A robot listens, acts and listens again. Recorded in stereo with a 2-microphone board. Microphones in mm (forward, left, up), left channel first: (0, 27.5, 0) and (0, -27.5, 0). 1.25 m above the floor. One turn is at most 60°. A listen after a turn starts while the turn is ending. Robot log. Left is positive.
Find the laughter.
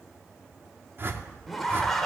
cmd yaw +30
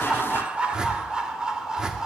note: So it is at 10° right.
cmd yaw -10
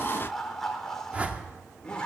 note: The laughter is now 15° left.
cmd yaw +15
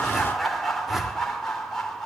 end: Found it: laughter, straight ahead, 2 to 4 m away.